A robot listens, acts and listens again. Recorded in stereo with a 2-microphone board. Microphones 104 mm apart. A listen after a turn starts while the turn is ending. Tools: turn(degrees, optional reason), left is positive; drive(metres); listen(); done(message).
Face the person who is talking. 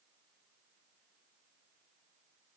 listen()
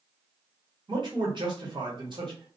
turn(degrees=-50, reason="The man speaking: about 50° right or 130° right.")
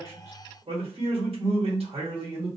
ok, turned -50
turn(degrees=-80, reason="So it is at 80° right.")
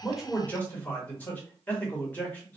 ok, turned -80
turn(degrees=15, reason="The man speaking is now 15° left.")
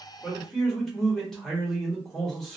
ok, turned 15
done("Found it: a man speaking, straight ahead.")